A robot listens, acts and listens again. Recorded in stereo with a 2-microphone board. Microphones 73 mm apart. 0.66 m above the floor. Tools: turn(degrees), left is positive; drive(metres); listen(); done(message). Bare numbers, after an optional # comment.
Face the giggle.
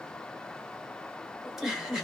turn(-30)
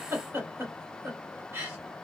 # So it is at 145° right.
turn(-145)
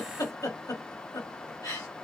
# The giggle is now 50° left.
turn(50)
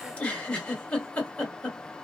# The giggle is now 15° left.
turn(15)
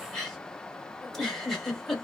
done("Found it: a giggle, straight ahead.")